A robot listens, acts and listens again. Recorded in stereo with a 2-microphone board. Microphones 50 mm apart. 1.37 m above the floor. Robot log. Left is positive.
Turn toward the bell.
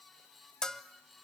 cmd yaw +30
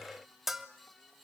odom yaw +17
end: Facing the bell.